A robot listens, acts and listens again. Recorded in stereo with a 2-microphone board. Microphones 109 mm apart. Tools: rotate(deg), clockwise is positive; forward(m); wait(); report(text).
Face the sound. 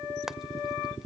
rotate(30)
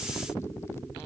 wait()
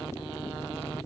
wait()
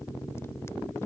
report("I heard frying, but can't make it out now. It was about 25° left or 145° right.")